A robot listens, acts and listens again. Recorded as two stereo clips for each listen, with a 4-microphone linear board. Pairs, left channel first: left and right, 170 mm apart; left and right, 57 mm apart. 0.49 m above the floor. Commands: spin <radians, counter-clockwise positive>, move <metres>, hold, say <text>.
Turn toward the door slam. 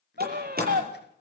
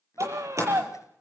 spin -1.05
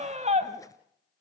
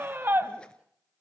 hold
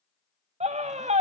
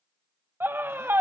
say I heard a door slam, but can't make it out now. It was about straight ahead or 60° right.